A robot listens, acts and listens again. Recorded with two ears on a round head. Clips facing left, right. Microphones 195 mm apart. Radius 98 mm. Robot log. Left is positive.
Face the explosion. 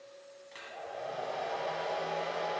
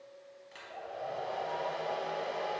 cmd idle
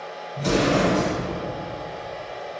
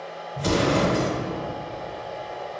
note: The explosion: about 45° right or 135° right.
cmd yaw -45
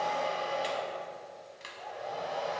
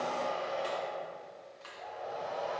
cmd idle
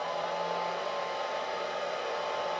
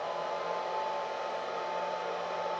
end: I heard an explosion, but can't make it out now. It was about straight ahead or 90° right.